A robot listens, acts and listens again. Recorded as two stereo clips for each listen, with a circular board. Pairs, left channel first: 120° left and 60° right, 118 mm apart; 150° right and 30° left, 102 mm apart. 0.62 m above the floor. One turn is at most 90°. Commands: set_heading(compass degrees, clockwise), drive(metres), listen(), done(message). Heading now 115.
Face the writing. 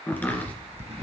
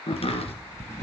set_heading(200)
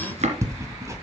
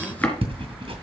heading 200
done("Found it: writing, straight ahead.")